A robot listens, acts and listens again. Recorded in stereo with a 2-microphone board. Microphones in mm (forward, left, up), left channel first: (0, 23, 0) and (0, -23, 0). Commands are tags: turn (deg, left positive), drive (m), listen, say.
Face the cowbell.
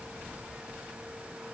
<listen/>
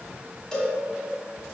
<turn deg="15"/>
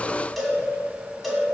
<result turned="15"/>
<say>Facing the cowbell, 2 to 4 m away.</say>